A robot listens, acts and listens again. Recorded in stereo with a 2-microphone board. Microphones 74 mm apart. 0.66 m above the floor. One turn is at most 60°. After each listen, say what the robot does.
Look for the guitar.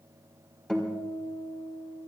Turn 30° left.
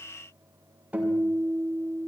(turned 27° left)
Turn 20° right.
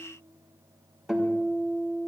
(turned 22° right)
Found it: a guitar, straight ahead.